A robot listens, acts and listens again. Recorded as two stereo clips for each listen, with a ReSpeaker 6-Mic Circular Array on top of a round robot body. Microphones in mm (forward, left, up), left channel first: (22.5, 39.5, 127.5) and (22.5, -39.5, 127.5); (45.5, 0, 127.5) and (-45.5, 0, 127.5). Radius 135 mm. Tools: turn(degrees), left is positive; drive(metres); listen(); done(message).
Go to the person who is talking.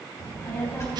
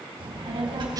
turn(degrees=145)
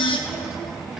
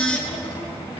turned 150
drive(metres=1.0)
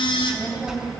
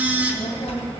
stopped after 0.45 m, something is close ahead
turn(degrees=-10)
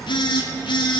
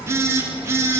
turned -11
done("Blocked. The child speaking is further on, straight ahead.")